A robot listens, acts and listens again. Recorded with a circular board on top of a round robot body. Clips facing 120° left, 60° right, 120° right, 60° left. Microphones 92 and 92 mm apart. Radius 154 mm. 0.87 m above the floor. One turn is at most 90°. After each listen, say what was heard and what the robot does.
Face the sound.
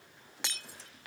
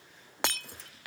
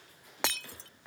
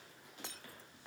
The breaking glass: 100° right. Turn 90° right.
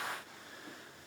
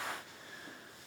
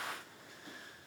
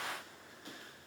Nothing new. It was at 10° right. Turn 10° right.
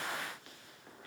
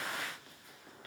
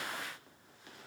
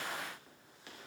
I heard breaking glass from this way, but can't make it out now.